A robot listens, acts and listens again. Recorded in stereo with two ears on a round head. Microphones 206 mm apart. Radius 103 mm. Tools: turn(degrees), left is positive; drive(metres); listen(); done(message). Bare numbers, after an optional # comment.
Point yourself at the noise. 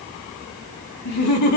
turn(90)
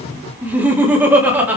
# So it is at 10° right.
turn(-10)
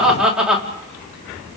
done("Facing the laughter, 2 to 4 m away.")